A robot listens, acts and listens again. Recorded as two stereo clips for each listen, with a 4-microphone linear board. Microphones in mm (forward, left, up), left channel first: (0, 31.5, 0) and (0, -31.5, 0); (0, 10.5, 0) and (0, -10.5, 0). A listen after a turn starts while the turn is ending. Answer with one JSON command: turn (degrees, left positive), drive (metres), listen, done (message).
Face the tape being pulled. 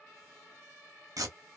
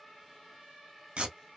{"turn": -90}
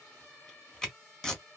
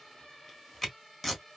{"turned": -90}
{"turn": 10}
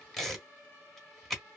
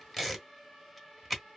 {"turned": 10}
{"done": "Facing the tape being pulled."}